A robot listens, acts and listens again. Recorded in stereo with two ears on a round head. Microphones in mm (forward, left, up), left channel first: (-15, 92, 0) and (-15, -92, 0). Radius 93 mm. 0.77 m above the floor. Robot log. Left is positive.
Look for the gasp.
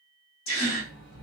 note: The gasp: about 70° left or 110° left.
cmd yaw +70
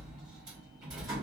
cmd idle
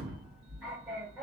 end: I heard a gasp, but can't make it out now. It was about straight ahead or 40° left.